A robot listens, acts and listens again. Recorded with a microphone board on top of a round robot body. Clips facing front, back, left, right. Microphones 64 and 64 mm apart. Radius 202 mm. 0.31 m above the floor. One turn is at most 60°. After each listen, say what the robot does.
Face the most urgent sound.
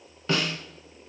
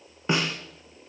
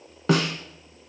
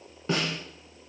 Keep listening.
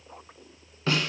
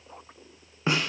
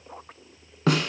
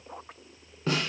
Keep listening.
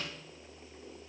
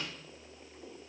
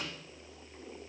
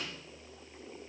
I can't make out anything urgent, only a snare drum.